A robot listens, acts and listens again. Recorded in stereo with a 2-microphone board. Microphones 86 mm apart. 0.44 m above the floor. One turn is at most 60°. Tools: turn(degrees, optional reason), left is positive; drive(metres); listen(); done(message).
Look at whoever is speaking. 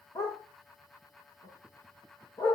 listen()
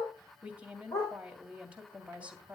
turn(degrees=-15, reason="The woman speaking: about 15° right or 165° right.")
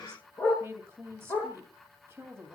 turn(degrees=-60, reason="So it is at 150° right.")
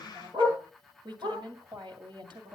turn(degrees=-60, reason="The woman speaking is now 75° right.")
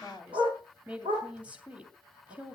turn(degrees=-15, reason="The woman speaking is now 15° right.")
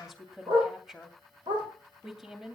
done("Facing the woman speaking, 2 to 4 m away.")